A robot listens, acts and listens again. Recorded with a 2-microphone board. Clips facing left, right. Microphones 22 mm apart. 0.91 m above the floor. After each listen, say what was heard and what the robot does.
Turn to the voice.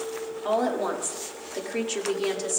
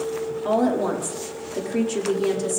The woman speaking: about 25° left or 155° left. Turn 25° left.
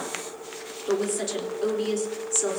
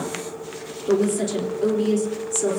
The woman speaking: about 15° left or 165° left. Turn 15° left.
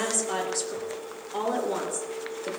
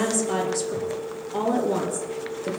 Turn 30° left.
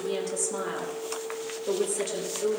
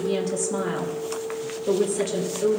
So it is at 15° right. Turn 15° right.
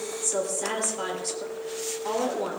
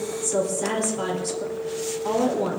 Found it: a woman speaking, straight ahead, 2 to 4 m away.